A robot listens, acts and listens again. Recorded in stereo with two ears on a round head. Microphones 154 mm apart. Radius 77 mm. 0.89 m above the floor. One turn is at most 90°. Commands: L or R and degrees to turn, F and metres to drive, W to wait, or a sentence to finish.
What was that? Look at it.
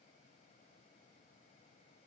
W
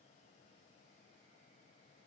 W
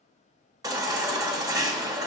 R20
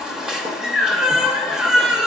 Facing the baby crying, 1 to 2 m away.